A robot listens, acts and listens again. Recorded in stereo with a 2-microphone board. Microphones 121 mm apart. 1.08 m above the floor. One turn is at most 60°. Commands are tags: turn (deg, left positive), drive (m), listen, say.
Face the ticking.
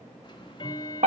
<turn deg="40"/>
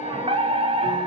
<listen/>
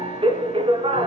<listen/>
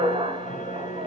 <turn deg="60"/>
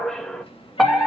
<turn deg="45"/>
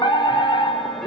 <listen/>
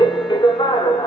<say>I heard ticking from this way, but can't make it out now.</say>